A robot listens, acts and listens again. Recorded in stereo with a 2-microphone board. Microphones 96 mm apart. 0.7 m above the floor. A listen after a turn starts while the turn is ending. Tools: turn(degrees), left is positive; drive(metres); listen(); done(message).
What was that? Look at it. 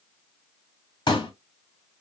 turn(degrees=50)
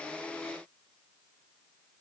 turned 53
listen()
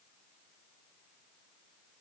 done("I heard a pop, but can't make it out now. It was about 5° right or 80° left.")